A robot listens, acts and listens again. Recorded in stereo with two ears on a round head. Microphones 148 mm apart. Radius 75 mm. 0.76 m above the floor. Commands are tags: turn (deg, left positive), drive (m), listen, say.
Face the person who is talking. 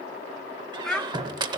<turn deg="30"/>
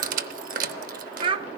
<turn deg="-30"/>
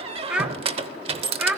<say>Found it: a child speaking, straight ahead, under 1 m away.</say>